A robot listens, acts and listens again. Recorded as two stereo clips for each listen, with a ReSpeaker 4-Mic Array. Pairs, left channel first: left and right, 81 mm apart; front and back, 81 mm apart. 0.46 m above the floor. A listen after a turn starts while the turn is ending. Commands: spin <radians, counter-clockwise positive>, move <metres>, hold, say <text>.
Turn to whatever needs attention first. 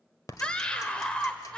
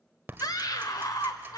spin 0.26
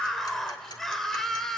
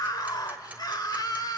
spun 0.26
say Found it: a scream, straight ahead, 1 to 2 m away.